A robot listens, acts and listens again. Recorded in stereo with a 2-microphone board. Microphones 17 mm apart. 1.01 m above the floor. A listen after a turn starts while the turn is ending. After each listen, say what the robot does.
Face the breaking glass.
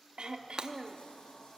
Turn 60° right.
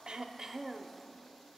Keep listening.
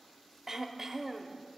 I heard breaking glass, but can't make it out now. It was about straight ahead or 60° right.